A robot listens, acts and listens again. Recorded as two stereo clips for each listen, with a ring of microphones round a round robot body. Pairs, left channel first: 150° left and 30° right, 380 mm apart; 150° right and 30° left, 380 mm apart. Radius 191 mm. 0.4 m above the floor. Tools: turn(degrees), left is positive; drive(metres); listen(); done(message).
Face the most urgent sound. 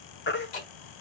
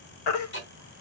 turn(degrees=-150)
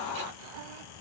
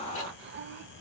listen()
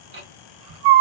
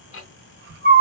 turn(degrees=-30)
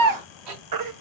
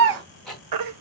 done("Found it: a baby crying, straight ahead, 1 to 2 m away.")